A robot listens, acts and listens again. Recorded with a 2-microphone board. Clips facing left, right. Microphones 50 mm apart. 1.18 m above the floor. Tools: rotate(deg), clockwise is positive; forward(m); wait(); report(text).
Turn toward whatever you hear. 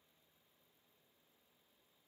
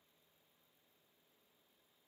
wait()
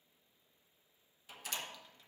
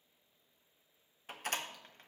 rotate(45)
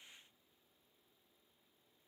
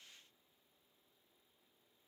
wait()
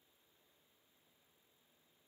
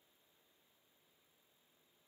report("I heard a door slam, but can't make it out now. It was about straight ahead or 90° right.")